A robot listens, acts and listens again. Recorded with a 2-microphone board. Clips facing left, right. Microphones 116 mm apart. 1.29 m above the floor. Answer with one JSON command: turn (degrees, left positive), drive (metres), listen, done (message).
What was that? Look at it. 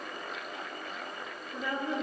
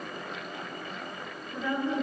{"turn": 30}
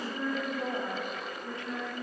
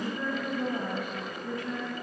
{"turn": 150}
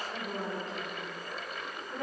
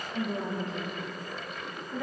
{"turn": 40}
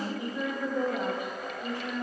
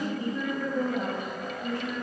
{"turn": 15}
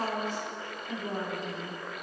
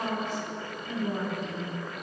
{"done": "Found it: a woman speaking, straight ahead."}